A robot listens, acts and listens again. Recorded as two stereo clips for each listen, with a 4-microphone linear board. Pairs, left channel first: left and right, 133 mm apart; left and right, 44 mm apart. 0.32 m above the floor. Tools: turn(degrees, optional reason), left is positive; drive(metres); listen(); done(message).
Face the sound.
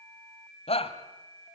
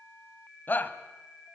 turn(degrees=50, reason="The shout: about 50° left or 130° left.")
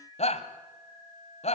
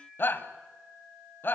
turn(degrees=75, reason="So it is at 75° left.")
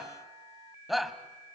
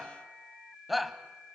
done("Found it: a shout, straight ahead.")